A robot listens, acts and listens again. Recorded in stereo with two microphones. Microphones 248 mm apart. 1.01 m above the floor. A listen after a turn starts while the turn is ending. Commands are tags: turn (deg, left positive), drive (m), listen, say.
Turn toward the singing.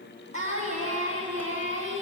<turn deg="-55"/>
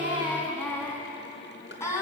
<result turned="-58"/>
<turn deg="10"/>
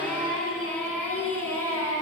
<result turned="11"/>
<turn deg="10"/>
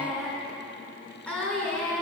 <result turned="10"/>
<say>Facing the singing.</say>